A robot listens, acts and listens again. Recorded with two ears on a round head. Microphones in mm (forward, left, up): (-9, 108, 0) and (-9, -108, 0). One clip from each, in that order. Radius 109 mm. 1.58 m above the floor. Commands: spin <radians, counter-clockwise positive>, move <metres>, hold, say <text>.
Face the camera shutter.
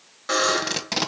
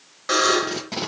hold
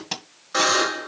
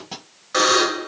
hold
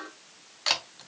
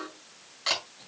spin 0.44
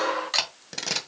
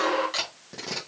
spin 2.18
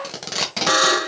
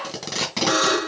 hold
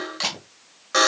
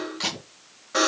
hold
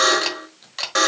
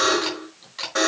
spin 0.87
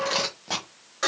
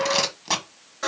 hold
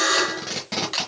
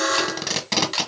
say Found it: a camera shutter, straight ahead.